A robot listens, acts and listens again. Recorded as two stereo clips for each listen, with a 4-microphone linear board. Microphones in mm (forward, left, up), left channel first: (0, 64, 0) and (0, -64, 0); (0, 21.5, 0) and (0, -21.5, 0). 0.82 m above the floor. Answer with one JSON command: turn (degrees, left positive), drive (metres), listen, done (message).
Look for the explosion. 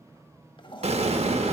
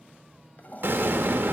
{"turn": -55}
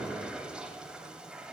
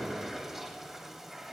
{"listen": true}
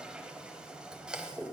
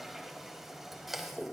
{"done": "I heard an explosion, but can't make it out now. It was about straight ahead or 70° right."}